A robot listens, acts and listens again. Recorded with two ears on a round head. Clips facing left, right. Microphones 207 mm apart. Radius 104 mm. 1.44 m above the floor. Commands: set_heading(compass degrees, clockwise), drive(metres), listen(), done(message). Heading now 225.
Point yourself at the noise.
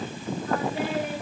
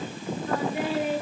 set_heading(290)
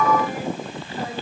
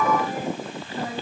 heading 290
set_heading(325)
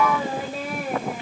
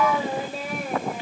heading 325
done("Facing the singing, 2 to 4 m away.")